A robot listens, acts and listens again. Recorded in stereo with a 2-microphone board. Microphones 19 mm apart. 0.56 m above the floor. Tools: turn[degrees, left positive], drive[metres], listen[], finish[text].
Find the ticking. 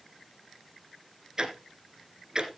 Thought: The ticking: about 30° right or 150° right.
Action: turn[-30]
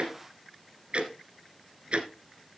Thought: So it is at 120° right.
Action: turn[-120]
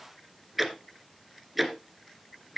Thought: The ticking is now 15° right.
Action: turn[-15]
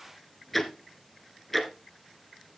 Action: finish[Found it: ticking, straight ahead, 1 to 2 m away.]